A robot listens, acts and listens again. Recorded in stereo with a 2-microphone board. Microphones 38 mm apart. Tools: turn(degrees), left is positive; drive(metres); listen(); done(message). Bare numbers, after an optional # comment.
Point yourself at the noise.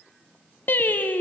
# The singing: about 60° left or 120° left.
turn(60)
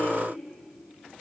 listen()
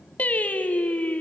# So it is at 50° left.
turn(50)
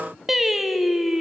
done("Facing the singing.")